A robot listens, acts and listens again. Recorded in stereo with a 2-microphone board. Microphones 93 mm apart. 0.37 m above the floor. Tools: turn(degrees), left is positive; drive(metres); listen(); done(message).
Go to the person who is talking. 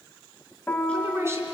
turn(degrees=-25)
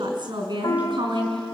turn(degrees=-125)
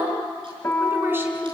turn(degrees=-25)
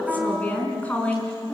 turn(degrees=15)
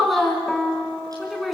drive(metres=1.0)
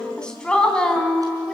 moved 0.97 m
turn(degrees=10)
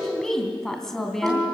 drive(metres=1.0)
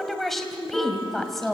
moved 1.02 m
drive(metres=1.0)
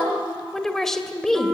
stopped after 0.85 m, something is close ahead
done("I am next to the woman speaking.")